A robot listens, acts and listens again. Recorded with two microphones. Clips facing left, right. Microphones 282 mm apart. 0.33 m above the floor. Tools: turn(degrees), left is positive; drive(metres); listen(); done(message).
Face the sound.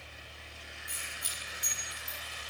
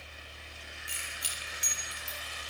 turn(degrees=-75)
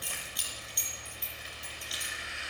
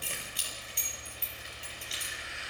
turn(degrees=-30)
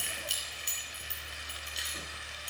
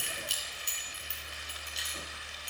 done("Found it: keys jangling, straight ahead.")